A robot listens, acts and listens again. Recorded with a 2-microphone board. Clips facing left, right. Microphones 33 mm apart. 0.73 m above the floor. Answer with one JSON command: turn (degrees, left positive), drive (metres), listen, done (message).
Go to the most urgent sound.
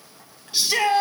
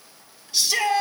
{"turn": 25}
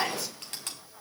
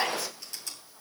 {"drive": 1.0}
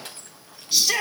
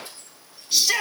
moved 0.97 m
{"drive": 1.0}
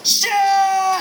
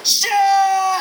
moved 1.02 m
{"drive": 1.0}
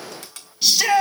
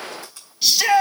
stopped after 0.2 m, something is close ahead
{"done": "Arrived at the shout, straight ahead."}